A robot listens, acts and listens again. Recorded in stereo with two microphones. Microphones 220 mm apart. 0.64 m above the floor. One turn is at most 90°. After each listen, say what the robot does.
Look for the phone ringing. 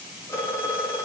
Turn 30° left.
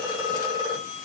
Turn 20° right.
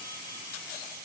Keep listening.
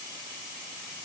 Keep listening.
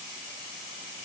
I heard a phone ringing from this way, but can't make it out now.